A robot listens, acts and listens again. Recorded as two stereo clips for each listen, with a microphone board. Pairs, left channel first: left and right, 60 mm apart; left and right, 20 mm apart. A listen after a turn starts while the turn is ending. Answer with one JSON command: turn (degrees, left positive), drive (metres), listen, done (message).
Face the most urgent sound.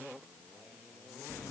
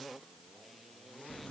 {"listen": true}
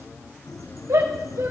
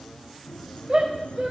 {"turn": -60}
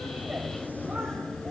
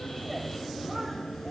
{"listen": true}
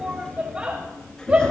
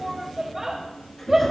{"turn": -25}
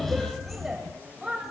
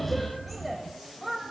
{"turn": -10}
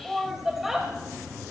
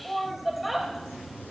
{"done": "Found it: a shout, straight ahead, 1 to 2 m away."}